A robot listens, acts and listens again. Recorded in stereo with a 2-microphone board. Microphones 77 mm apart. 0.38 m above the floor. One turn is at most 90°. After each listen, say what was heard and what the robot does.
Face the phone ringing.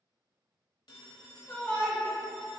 The phone ringing: about 60° left or 120° left. Turn 60° left.
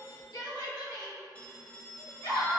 So it is at 20° left. Turn 20° left.
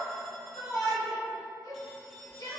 Keep listening.
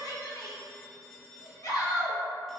Found it: a phone ringing, straight ahead, under 1 m away.